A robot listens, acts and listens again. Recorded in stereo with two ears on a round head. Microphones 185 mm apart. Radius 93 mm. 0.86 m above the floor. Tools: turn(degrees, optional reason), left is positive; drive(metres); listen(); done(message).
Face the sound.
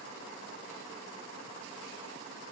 listen()
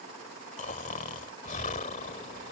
turn(degrees=35, reason="The snoring: about 35° left or 145° left.")
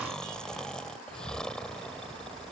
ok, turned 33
done("Facing the snoring.")